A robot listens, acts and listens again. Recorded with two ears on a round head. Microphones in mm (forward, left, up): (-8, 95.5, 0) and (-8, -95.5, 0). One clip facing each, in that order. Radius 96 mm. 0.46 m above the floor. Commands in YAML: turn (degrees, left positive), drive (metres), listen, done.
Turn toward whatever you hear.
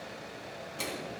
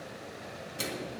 turn: -15
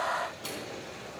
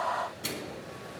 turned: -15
turn: -150
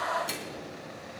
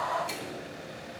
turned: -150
turn: 15
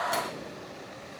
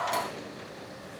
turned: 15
listen: true
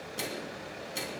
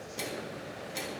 done: "Facing the microwave, 2 to 4 m away."